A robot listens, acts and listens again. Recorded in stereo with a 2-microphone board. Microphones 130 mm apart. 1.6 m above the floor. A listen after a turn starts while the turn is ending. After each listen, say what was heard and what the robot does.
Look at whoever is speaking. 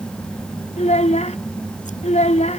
The child speaking: about 60° left or 120° left. Turn 60° left.
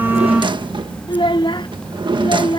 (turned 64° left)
So it is at 45° left. Turn 45° left.
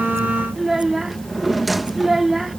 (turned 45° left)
Facing the child speaking.